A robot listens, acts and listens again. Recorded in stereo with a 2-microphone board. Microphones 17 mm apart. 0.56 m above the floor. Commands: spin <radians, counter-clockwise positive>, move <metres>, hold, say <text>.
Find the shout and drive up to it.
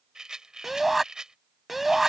spin -0.26
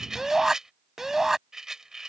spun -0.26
spin -2.62
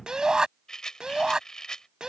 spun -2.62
spin -1.05
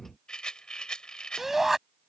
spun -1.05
spin -0.35
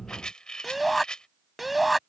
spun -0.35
move 1.0
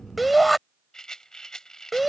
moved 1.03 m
move 1.0
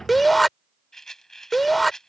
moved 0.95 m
move 1.0
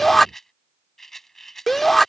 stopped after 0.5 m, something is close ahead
spin 0.26
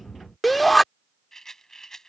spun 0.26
say I am next to the shout.